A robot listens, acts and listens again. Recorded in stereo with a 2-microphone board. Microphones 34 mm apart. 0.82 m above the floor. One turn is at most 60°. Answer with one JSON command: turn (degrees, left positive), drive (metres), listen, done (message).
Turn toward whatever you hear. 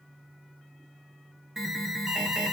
{"turn": -30}
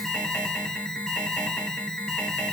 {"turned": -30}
{"turn": 20}
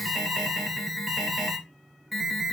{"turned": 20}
{"done": "Found it: an alarm, straight ahead, 1 to 2 m away."}